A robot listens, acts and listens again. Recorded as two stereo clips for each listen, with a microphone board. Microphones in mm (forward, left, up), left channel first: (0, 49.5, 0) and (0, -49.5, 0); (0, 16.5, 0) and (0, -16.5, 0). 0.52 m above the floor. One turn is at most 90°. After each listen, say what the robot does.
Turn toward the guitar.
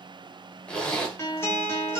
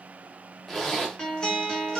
Turn 25° left.
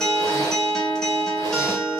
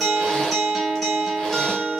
Facing the guitar.